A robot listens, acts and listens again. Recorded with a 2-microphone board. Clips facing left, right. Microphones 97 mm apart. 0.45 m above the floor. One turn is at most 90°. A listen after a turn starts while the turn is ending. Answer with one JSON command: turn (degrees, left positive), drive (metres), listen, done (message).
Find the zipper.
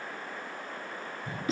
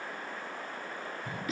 {"listen": true}
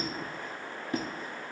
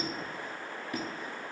{"listen": true}
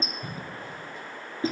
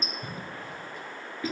{"done": "I can't make out a zipper, only a squeak and a cough."}